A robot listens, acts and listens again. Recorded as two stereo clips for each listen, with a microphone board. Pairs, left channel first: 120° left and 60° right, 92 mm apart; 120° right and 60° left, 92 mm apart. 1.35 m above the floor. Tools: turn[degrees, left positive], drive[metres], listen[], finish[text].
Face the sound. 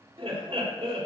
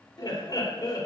Thought: The laughter: 70° right.
Action: turn[-70]
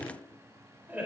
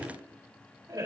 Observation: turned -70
Thought: The laughter is now 15° left.
Action: turn[15]
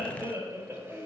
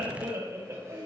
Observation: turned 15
Action: finish[Facing the laughter, over 4 m away.]